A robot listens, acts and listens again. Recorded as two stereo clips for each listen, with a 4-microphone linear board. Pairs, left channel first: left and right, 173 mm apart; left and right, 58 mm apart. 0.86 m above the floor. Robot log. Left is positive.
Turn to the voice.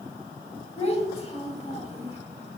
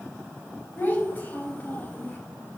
note: The child speaking: about 35° left or 145° left.
cmd yaw +35
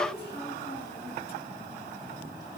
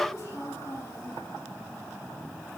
note: So it is at 110° left.
cmd yaw +110
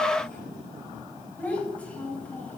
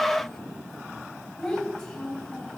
note: The child speaking is now 10° left.
cmd yaw +10
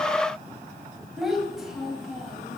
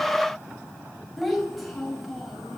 end: Found it: a child speaking, straight ahead, 2 to 4 m away.